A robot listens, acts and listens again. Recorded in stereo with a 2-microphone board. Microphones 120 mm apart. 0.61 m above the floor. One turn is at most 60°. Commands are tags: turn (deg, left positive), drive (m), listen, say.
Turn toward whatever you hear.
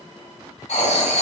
<turn deg="60"/>
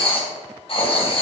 <turn deg="50"/>
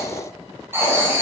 <turn deg="-20"/>
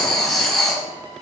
<say>Facing the writing, 2 to 4 m away.</say>